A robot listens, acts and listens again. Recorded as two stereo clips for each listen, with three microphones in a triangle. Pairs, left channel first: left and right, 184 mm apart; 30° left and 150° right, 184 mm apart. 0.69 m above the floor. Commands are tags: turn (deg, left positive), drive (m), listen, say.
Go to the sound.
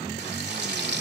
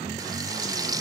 <turn deg="-80"/>
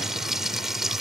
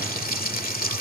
<drive m="1.0"/>
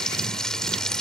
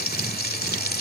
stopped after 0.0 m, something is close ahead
<say>Blocked. The frying is further on, straight ahead.</say>